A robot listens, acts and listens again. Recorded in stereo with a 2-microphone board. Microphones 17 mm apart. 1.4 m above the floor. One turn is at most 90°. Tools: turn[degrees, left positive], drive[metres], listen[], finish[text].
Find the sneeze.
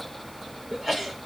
Thought: The sneeze: about 35° right or 145° right.
Action: turn[-35]
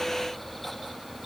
Action: listen[]
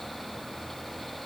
Action: finish[I heard a sneeze, but can't make it out now. It was about straight ahead or 110° right.]